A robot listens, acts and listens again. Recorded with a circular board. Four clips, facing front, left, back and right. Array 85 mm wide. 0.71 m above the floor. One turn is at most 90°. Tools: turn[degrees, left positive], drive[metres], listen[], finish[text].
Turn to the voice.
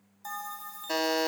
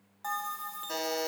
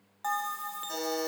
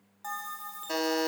Action: listen[]
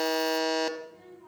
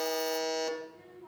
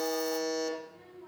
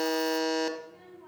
Thought: The child speaking: 110° right.
Action: turn[-90]
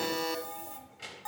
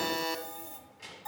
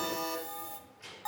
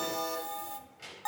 Thought: The child speaking is now 15° right.
Action: turn[-15]
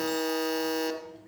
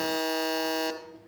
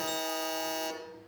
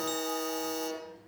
Action: finish[Facing the child speaking.]